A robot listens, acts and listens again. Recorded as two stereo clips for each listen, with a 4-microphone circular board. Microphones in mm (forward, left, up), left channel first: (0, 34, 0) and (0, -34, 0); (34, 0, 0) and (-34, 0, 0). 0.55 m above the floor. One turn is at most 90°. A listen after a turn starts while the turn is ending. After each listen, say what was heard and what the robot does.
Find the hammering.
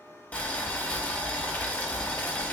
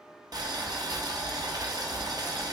Keep listening.
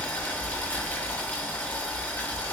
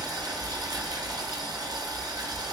Keep listening.
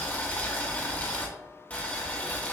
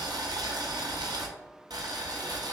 I can't make out hammering to turn to.